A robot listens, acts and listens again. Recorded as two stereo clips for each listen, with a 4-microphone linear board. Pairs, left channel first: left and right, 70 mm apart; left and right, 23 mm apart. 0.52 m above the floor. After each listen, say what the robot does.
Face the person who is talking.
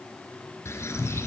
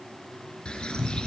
Keep listening.
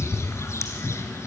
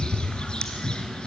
Keep listening.
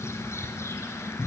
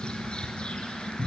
I can't make out anyone speaking to turn to.